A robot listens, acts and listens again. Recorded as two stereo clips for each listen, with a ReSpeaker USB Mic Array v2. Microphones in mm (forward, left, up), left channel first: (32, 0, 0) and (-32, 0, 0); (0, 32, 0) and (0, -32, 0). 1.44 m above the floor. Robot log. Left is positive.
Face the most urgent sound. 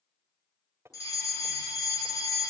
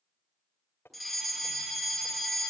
end: Found it: a fire alarm, straight ahead.